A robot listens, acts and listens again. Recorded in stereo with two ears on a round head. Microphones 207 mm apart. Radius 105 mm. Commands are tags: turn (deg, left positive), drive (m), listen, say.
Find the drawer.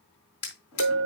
<turn deg="75"/>
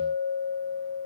<listen/>
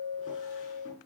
<listen/>
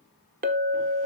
<say>I heard a drawer, but can't make it out now. It was about straight ahead or 30° left.</say>